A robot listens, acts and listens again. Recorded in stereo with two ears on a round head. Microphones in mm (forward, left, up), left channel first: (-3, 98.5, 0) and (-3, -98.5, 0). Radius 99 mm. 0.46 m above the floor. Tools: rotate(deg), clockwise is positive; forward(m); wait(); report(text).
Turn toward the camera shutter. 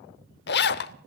wait()
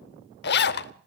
wait()
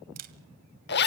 rotate(40)
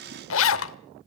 wait()
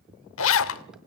wait()
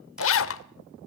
report("I heard a camera shutter, but can't make it out now. It was about straight ahead or 100° right.")